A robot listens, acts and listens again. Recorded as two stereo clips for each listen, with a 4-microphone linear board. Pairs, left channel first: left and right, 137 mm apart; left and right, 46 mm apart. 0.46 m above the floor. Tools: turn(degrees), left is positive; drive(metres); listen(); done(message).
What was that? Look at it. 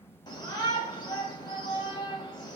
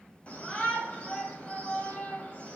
turn(degrees=30)
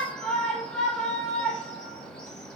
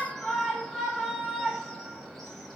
done("Found it: a shout, straight ahead, 2 to 4 m away.")